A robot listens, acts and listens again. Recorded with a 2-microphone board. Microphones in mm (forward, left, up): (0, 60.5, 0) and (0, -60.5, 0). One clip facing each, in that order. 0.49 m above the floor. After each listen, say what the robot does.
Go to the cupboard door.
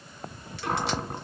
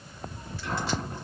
Turn 70° left.
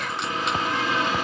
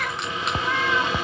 Turn 35° left.
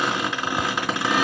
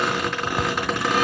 Drive 1.0 m forward.
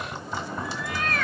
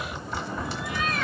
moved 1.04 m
Drive 1.0 m forward.
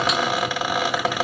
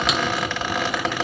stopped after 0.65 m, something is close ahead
Turn 10° left.
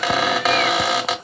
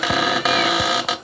I am next to the cupboard door.